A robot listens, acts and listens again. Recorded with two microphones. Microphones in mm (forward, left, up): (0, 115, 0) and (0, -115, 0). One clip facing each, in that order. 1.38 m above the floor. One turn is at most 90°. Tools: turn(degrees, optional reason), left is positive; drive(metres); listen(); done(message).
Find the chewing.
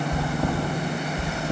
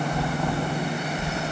turn(degrees=55, reason="The chewing: about 55° left or 125° left.")
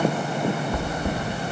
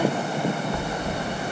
turn(degrees=60, reason="So it is at 60° left.")
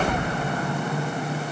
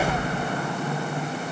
turn(degrees=10, reason="The chewing is now 10° left.")
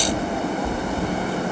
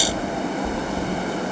done("Facing the chewing, 1 to 2 m away.")